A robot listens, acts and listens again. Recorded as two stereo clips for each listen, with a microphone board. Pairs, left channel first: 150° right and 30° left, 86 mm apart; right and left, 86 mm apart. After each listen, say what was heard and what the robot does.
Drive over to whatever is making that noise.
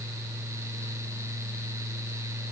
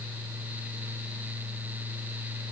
Keep listening.
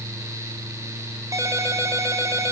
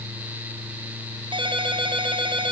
The ringtone: 80° left. Turn 80° left.
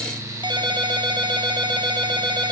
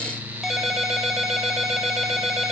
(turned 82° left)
Drive 1.0 m forward.
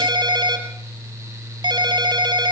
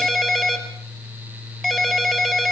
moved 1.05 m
Drive 1.0 m forward.
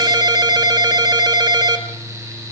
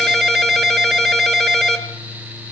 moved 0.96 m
Drive 1.0 m forward.
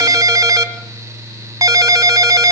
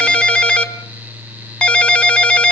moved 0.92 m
The ringtone is now 15° right. Turn 15° right.
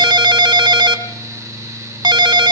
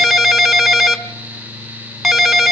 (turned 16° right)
Drive 1.0 m forward.
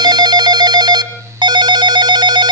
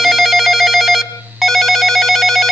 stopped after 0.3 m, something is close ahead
Arrived at the ringtone, straight ahead.